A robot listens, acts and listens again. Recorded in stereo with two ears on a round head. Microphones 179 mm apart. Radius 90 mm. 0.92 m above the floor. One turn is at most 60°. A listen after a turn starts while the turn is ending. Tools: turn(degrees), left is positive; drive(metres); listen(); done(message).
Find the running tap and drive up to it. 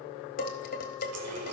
turn(degrees=-60)
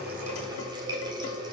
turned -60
turn(degrees=-20)
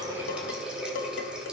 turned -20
drive(metres=1.0)
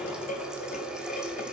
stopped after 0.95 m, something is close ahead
done("Arrived at the running tap, straight ahead.")